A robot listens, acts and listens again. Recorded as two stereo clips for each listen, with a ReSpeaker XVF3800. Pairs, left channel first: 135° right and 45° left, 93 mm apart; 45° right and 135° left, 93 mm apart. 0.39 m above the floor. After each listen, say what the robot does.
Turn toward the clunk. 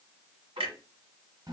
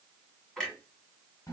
Turn 35° left.
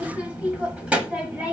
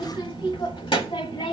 Facing where the clunk came from. I can't hear it now.